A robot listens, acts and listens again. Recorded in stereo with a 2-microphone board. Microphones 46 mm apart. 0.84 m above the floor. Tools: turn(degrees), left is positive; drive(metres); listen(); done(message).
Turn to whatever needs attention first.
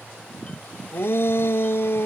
turn(degrees=60)
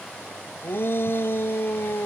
turn(degrees=55)
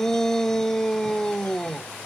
turn(degrees=10)
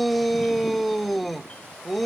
done("Found it: a shout, straight ahead.")